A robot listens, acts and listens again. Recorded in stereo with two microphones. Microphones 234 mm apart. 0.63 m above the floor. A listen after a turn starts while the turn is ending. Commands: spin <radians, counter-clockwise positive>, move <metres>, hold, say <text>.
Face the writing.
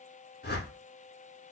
hold
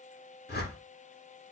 hold
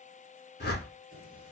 spin -1.57
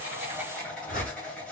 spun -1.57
say Facing the writing.